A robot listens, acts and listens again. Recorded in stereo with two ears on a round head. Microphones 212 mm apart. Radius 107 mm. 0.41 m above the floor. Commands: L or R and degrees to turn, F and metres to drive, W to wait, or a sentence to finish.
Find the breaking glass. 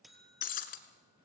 L35
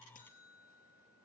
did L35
W
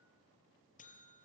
I heard breaking glass, but can't make it out now. It was about straight ahead or 110° left.